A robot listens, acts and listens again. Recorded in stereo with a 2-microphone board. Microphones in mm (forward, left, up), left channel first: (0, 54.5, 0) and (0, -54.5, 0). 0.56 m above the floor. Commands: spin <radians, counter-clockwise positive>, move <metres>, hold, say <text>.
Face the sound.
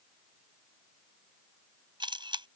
spin -0.79
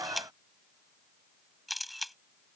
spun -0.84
say Found it: a camera shutter, straight ahead.